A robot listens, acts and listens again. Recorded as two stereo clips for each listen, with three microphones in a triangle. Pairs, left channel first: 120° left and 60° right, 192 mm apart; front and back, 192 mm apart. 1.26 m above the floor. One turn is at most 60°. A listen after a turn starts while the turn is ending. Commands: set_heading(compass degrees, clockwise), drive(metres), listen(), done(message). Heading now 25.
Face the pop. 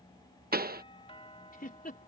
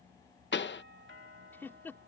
set_heading(45)
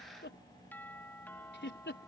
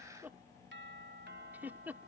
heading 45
done("I heard a pop from this way, but can't make it out now.")